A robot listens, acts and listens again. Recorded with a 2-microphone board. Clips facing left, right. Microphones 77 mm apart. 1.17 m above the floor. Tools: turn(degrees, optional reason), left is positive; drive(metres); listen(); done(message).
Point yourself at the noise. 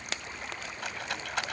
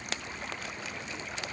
turn(degrees=90)
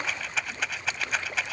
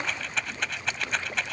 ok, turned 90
done("Found it: a rattle, straight ahead.")